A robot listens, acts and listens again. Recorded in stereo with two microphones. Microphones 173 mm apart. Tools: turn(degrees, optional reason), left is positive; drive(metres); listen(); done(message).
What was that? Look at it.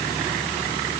listen()
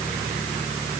listen()
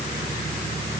done("I can't make out anything to turn to.")